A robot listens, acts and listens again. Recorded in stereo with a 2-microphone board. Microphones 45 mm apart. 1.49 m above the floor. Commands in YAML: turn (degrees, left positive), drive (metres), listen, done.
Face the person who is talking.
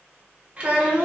turn: -30
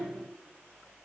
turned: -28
listen: true
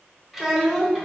done: "Found it: a child speaking, straight ahead."